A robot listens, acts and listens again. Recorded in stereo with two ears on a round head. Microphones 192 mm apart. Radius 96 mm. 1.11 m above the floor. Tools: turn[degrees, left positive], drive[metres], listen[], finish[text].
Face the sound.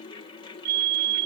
Thought: The fire alarm: about 55° right or 125° right.
Action: turn[-55]
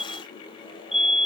Action: finish[Found it: a fire alarm, straight ahead.]